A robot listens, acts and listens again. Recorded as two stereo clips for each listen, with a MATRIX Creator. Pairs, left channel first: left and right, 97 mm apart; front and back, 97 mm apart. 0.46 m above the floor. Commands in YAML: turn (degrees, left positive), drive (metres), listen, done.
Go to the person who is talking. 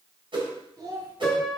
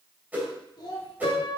turn: -45
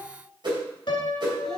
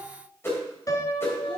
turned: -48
listen: true
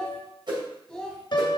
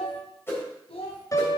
drive: 1.0
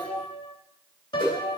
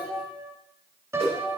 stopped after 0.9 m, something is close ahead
turn: 15
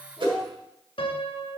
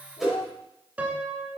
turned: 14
done: "I am next to the child speaking."